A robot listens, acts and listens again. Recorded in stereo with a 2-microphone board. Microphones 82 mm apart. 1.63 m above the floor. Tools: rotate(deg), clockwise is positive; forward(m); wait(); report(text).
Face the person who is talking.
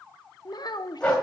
rotate(-55)
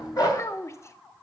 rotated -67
rotate(-40)
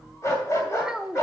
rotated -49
rotate(10)
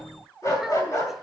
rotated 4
wait()
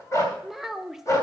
report("Found it: a child speaking, straight ahead.")